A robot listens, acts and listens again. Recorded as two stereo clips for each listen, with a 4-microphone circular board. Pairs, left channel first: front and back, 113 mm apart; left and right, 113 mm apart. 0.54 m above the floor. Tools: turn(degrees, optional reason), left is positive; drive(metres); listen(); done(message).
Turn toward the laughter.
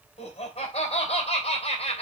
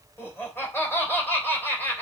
turn(degrees=20, reason="The laughter: 20° left.")
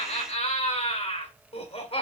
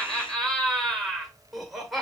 done("Found it: laughter, straight ahead.")